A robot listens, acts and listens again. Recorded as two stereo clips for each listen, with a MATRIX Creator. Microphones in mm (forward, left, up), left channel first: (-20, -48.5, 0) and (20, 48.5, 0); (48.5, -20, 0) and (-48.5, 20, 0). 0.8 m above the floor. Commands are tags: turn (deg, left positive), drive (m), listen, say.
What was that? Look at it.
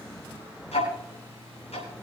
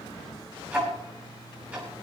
<turn deg="-125"/>
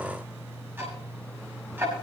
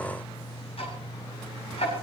<say>Facing the ticking.</say>